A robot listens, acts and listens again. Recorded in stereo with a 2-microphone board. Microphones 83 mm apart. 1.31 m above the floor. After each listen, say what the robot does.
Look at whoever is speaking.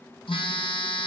Keep listening.
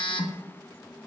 Keep listening.
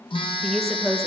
Turn 30° left.
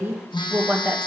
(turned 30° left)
Turn 25° right.
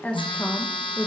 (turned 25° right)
Turn 15° left.
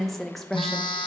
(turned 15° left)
Found it: a woman speaking, straight ahead.